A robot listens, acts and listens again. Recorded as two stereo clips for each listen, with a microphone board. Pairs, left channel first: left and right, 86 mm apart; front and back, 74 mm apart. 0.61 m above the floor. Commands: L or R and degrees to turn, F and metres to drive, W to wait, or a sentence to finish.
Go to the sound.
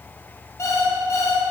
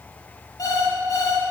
L35
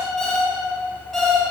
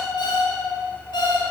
F1.0
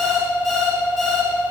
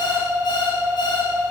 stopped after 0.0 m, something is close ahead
Blocked. The alarm clock is further on, straight ahead.